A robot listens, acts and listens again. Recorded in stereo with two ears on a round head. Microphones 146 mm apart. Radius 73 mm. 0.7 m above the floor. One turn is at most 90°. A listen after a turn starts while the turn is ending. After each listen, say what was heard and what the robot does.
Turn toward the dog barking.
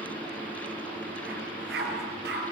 The dog barking: about 70° right or 110° right. Turn 70° right.
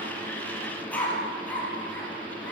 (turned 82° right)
So it is at 10° left. Turn 10° left.
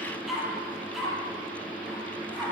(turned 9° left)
Found it: a dog barking, straight ahead.